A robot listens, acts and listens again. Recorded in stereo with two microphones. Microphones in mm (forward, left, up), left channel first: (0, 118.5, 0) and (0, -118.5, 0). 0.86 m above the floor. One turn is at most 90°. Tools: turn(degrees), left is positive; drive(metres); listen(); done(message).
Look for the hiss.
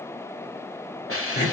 turn(degrees=65)
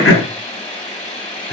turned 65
turn(degrees=30)
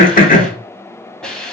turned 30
done("Facing the hiss, 1 to 2 m away.")